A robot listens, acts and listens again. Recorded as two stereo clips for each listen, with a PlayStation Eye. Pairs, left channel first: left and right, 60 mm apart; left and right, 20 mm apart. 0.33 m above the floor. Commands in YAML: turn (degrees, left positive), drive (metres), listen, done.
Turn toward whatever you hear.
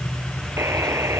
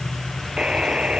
turn: -50
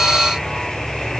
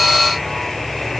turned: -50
listen: true
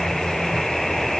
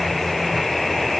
done: "Facing the buzzer."